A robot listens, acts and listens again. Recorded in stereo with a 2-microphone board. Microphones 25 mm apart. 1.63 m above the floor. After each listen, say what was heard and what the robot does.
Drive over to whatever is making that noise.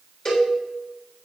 The cowbell: about 35° left or 145° left. Turn 35° left.
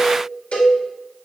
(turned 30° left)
So it is at 115° left. Turn 115° left.
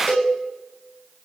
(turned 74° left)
The cowbell is now 40° left. Turn 40° left.
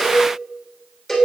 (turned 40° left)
Drive 1.0 m forward.
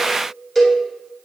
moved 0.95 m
Drive 1.0 m forward.
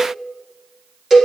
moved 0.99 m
The cowbell is now 10° right. Turn 10° right.
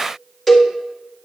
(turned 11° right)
Drive 1.0 m forward.
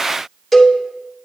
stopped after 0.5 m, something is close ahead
Arrived at the cowbell, straight ahead.